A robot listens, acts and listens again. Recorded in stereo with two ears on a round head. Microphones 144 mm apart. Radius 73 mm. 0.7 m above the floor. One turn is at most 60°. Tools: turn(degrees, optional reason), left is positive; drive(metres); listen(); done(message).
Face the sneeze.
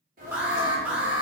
turn(degrees=-55, reason="The sneeze: about 55° right or 125° right.")
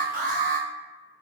listen()
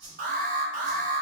done("I heard a sneeze, but can't make it out now. It was about straight ahead or 70° right.")